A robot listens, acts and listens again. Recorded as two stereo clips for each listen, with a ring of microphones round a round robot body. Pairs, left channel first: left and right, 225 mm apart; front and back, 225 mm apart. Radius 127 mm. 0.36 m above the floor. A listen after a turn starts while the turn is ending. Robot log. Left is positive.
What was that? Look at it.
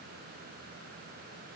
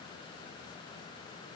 cmd idle
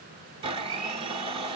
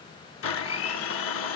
note: The blender: 20° right.
cmd yaw -20
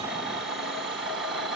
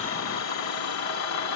end: Found it: a blender, straight ahead, 1 to 2 m away.